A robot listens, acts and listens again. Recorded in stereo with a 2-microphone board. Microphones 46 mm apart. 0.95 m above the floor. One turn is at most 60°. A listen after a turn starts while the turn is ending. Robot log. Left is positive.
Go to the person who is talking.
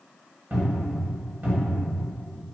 cmd idle
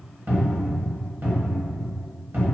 cmd idle
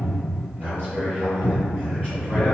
note: The man speaking: about 40° right or 140° right.
cmd yaw -40
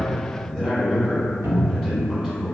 cmd fwd 1.0
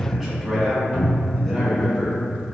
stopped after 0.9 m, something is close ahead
end: Arrived at the man speaking, straight ahead.